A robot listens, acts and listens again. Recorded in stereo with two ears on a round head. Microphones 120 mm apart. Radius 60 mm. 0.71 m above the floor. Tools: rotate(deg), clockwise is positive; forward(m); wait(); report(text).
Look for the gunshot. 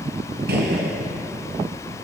rotate(90)
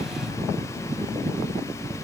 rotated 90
report("Facing where the gunshot came from. I can't hear it now.")